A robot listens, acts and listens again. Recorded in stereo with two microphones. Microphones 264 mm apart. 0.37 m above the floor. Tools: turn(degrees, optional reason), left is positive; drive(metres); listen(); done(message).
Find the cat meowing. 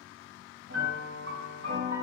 listen()
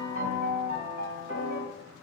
listen()
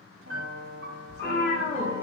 turn(degrees=30)
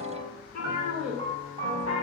turn(degrees=145, reason="So it is at 145° left.")
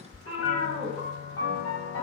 turn(degrees=45, reason="The cat meowing is now 45° left.")
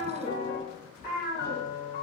turn(degrees=15, reason="The cat meowing is now 15° left.")
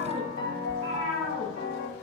done("Facing the cat meowing.")